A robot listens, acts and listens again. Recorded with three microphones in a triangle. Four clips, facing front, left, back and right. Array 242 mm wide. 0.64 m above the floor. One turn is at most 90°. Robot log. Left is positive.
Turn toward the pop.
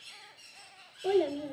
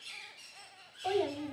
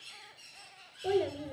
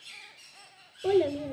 cmd idle
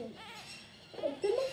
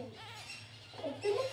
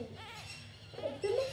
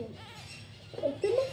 cmd idle
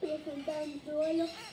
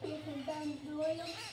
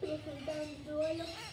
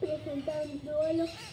end: I can't make out a pop, only a child speaking.